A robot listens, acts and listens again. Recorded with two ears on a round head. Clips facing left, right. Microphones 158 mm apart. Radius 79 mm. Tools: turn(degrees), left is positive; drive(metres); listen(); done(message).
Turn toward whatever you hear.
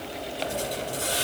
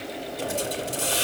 turn(degrees=-60)
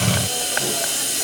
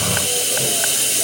turn(degrees=-60)
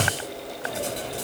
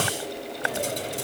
turn(degrees=-10)
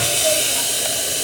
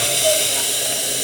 done("Found it: a hiss, straight ahead, over 4 m away.")